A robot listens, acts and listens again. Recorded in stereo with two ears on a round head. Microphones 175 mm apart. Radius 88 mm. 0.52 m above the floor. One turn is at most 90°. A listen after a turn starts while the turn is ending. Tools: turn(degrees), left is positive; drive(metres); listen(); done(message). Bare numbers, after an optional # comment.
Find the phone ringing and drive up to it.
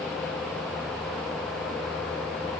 listen()
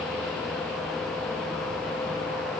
listen()
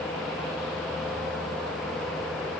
done("I can't make out a phone ringing to turn to.")